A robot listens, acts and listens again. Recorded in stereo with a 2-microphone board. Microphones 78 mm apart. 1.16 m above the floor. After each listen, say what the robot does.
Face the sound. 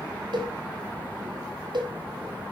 Turn 70° right.
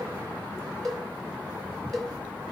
Facing the cowbell, 2 to 4 m away.